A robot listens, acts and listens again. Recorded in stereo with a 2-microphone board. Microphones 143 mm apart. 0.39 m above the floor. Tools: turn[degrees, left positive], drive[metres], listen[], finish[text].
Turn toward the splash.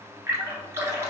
Thought: The splash: about 20° right or 160° right.
Action: turn[-20]
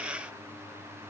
Action: listen[]
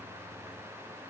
Action: finish[I heard a splash, but can't make it out now. It was about straight ahead or 140° right.]